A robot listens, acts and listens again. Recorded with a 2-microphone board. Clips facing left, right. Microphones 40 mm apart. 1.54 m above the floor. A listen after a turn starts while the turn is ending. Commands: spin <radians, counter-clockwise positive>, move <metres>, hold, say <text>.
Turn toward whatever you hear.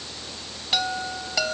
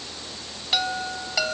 spin -0.52
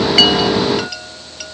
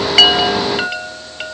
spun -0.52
spin -2.44
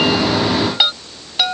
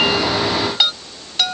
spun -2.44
spin 0.26
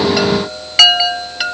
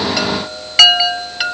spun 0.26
say Found it: a chime, straight ahead.